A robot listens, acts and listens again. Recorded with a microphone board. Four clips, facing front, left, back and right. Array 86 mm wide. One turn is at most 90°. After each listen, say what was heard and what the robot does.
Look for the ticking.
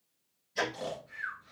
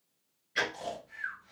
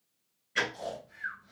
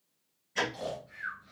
The ticking: 165° left. Turn 90° left.
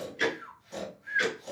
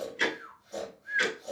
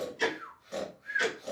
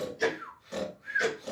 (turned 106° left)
The ticking is now 55° left. Turn 55° left.
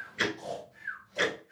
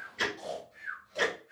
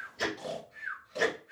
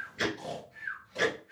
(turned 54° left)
Found it: ticking, straight ahead.